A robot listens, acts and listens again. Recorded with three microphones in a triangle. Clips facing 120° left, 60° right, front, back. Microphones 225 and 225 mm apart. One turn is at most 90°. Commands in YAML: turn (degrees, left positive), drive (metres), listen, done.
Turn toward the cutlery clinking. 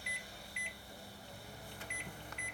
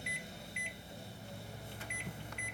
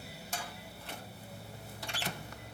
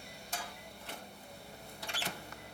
listen: true
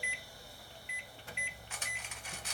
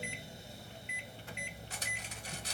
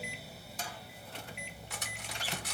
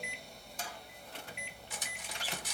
turn: -15
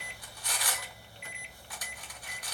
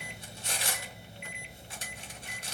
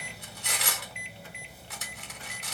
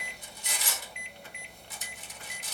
done: "Facing the cutlery clinking, under 1 m away."